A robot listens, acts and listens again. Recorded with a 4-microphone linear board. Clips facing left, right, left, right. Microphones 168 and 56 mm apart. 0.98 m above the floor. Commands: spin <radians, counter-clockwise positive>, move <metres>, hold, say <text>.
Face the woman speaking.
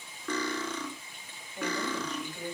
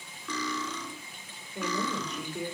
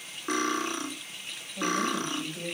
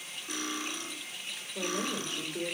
spin -1.57
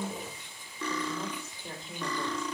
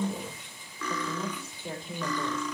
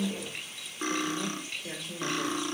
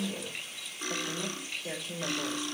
say Facing the woman speaking.